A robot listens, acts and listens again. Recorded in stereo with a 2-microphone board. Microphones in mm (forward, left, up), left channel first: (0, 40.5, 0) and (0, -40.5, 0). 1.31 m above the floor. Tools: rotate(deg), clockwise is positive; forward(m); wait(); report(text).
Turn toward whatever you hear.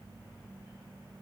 wait()
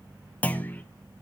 rotate(-20)
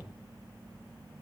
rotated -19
wait()
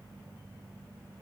report("I heard a clunk, but can't make it out now. It was about straight ahead or 140° left.")